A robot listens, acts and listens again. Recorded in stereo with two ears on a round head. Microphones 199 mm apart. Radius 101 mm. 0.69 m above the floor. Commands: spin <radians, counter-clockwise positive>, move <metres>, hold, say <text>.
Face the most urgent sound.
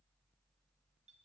hold
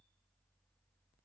hold
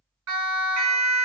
spin -1.57
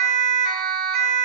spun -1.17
spin -0.44
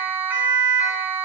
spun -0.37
say Found it: a siren, straight ahead, over 4 m away.